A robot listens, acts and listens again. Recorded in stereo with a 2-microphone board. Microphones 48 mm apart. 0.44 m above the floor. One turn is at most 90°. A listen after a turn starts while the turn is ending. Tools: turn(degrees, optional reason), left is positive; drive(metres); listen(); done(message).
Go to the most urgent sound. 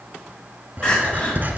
turn(degrees=20, reason="The crying: about 20° left or 160° left.")
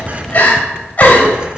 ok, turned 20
turn(degrees=90, reason="So it is at 140° left.")
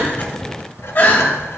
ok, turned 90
turn(degrees=55, reason="The crying is now 55° left.")
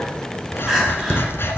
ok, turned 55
drive(metres=1.0)
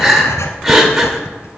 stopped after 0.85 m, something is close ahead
turn(degrees=-10, reason="The crying is now 10° right.")
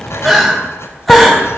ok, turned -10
done("I am next to the crying.")